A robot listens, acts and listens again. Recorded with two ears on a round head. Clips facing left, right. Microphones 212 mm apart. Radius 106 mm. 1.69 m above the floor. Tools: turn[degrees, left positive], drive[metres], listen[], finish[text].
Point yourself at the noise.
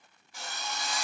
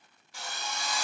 Thought: The drill: about 55° right or 125° right.
Action: turn[-55]
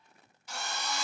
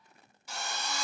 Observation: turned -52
Thought: So it is at 70° right.
Action: turn[-70]
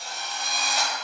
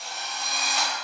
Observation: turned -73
Action: finish[Found it: a drill, straight ahead.]